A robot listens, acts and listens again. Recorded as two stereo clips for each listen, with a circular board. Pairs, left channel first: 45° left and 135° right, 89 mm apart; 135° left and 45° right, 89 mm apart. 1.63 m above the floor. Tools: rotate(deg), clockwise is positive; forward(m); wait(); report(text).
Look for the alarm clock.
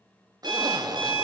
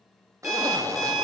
rotate(130)
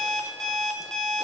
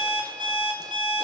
rotate(40)
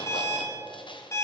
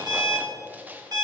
rotate(10)
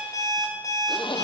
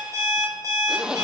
report("Found it: an alarm clock, straight ahead, 1 to 2 m away.")